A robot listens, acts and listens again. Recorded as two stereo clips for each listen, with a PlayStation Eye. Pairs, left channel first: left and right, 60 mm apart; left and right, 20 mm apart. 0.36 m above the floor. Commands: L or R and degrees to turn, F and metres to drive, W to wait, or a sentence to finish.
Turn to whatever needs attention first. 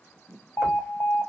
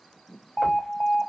L55
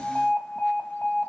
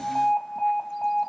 L20
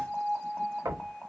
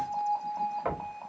Found it: an alarm, straight ahead.